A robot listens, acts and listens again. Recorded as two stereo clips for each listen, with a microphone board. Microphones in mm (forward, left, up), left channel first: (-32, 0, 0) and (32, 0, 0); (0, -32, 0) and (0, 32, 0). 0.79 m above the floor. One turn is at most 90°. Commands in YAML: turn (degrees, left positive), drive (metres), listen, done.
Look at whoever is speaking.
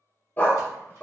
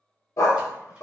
listen: true
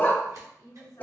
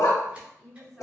turn: -90
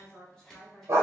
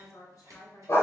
turn: -90
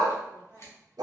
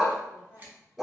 turn: -50
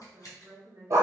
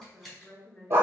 turn: -15
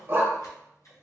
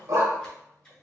listen: true
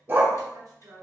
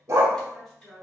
done: "Found it: a woman speaking, straight ahead."